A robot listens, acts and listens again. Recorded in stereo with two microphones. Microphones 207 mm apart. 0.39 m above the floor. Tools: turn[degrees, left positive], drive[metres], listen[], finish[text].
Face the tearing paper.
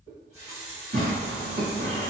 Thought: The tearing paper: about 60° right or 120° right.
Action: turn[-60]
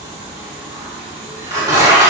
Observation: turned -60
Thought: So it is at 35° right.
Action: turn[-35]
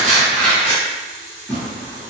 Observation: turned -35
Action: finish[Facing the tearing paper.]